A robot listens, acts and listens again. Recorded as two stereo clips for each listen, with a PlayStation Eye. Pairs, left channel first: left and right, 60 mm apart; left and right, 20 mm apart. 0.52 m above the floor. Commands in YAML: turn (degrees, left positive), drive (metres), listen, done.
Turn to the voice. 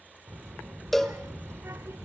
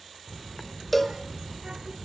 turn: -50
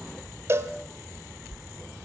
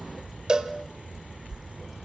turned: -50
done: "Facing the child speaking, 1 to 2 m away."